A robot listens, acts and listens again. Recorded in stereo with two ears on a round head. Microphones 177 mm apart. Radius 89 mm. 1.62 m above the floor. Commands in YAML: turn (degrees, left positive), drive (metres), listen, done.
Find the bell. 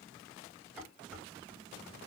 listen: true
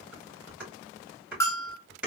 turn: 30
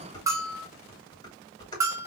turn: -15
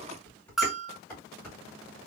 done: "Found it: a bell, straight ahead."